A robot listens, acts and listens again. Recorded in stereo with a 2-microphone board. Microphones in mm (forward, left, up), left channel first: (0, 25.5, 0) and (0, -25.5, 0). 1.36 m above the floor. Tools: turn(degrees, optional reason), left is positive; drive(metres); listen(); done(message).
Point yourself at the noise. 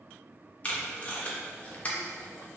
turn(degrees=25, reason="The tape being pulled: about 25° left or 155° left.")
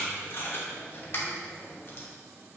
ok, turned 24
turn(degrees=125, reason="So it is at 125° left.")
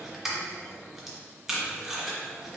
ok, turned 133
done("Found it: tape being pulled, straight ahead, under 1 m away.")